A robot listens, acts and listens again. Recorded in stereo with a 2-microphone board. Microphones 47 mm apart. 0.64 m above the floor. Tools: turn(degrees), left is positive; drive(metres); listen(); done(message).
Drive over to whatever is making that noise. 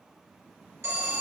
turn(degrees=-65)
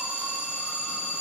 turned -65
turn(degrees=-25)
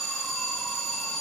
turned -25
drive(metres=1.0)
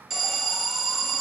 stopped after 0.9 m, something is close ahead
done("Blocked. The alarm is further on, straight ahead.")